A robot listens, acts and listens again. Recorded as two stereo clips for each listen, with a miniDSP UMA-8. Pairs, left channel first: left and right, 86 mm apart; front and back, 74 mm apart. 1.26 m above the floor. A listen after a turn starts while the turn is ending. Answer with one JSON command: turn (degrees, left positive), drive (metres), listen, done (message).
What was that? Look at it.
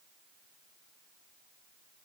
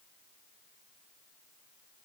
{"listen": true}
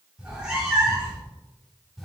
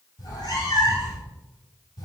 {"done": "Facing the cat meowing, 2 to 4 m away."}